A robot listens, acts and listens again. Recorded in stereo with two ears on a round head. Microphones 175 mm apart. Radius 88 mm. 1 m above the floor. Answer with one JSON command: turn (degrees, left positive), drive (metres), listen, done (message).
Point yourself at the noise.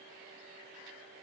{"listen": true}
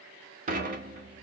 {"turn": -45}
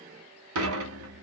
{"turn": -90}
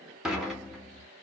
{"done": "Found it: dishes clattering, straight ahead."}